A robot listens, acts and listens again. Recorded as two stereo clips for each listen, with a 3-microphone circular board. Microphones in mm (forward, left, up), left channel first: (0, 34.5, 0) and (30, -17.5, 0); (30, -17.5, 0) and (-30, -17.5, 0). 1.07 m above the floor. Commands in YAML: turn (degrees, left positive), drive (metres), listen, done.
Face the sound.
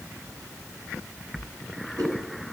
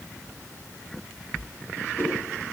listen: true
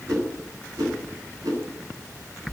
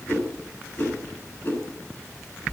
turn: -55
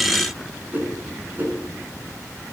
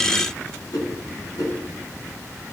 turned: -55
done: "Facing the whoosh, over 4 m away."